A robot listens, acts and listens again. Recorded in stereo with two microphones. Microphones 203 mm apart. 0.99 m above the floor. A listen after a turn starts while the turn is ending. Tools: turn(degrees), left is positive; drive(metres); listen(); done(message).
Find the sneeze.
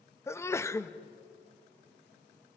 turn(degrees=30)
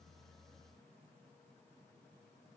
listen()
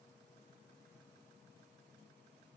done("I heard a sneeze, but can't make it out now. It was about 15° right or 135° left.")